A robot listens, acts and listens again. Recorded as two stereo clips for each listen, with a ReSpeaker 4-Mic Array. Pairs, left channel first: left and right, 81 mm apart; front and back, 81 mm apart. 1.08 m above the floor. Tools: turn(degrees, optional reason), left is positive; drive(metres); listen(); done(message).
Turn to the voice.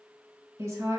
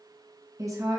turn(degrees=-135, reason="The woman speaking: 135° right.")
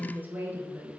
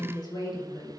turn(degrees=-25, reason="The woman speaking is now 25° right.")
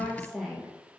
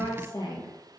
done("Facing the woman speaking, 1 to 2 m away.")